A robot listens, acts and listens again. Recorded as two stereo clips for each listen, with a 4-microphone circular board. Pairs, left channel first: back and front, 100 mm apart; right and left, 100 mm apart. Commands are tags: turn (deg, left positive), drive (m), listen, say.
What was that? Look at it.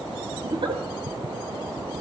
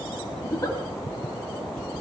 <turn deg="-35"/>
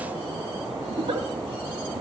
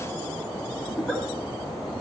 <say>Found it: a giggle, straight ahead.</say>